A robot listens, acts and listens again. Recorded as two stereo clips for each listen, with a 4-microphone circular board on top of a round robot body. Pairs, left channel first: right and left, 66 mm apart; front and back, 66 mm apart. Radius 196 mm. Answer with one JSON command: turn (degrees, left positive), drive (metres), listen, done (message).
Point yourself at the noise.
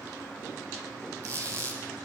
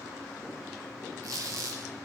{"turn": 140}
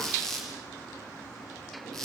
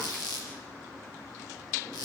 {"done": "Found it: a squeak, straight ahead, 2 to 4 m away."}